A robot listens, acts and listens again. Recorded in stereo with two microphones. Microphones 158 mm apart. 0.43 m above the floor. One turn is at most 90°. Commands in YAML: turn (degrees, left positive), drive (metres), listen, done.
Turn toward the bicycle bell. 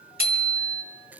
turn: -90
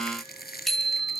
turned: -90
done: "Facing the bicycle bell, 2 to 4 m away."